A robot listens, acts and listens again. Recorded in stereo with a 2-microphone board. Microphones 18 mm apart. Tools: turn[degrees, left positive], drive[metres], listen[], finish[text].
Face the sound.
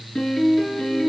Thought: The piano: about 45° left or 135° left.
Action: turn[45]
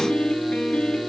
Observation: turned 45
Thought: So it is at 90° left.
Action: turn[90]
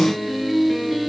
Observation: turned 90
Action: finish[Found it: a piano, straight ahead, 2 to 4 m away.]